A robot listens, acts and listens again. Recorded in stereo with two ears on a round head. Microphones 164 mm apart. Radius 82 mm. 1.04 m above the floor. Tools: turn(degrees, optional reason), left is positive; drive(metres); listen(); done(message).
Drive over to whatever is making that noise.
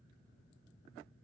listen()
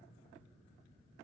listen()
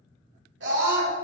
turn(degrees=-70, reason="The scream: about 70° right or 110° right.")
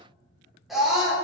drive(metres=1.0)
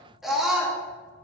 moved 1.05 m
drive(metres=1.0)
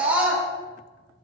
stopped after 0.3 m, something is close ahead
turn(degrees=-10, reason="The scream is now 10° right.")
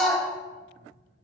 done("I am next to the scream.")